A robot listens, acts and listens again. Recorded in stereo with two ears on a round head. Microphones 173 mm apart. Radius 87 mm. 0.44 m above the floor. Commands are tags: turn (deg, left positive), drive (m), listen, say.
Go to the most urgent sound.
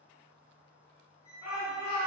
<turn deg="40"/>
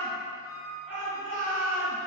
<turn deg="15"/>
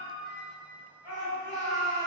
<drive m="1.0"/>
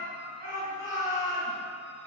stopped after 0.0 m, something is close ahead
<say>Something is in my way. I am facing the shout but have not reached it.</say>